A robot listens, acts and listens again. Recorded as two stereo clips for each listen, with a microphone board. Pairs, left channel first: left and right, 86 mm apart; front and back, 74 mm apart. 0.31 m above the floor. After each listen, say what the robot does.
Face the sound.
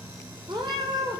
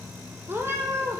Turn 125° right.
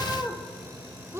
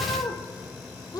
Turn 30° right.
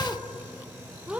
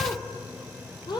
Turn 15° right.
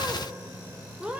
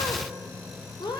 Turn 10° right.
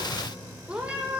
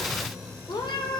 Turn 10° right.
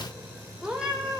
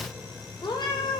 Found it: a cat meowing, straight ahead.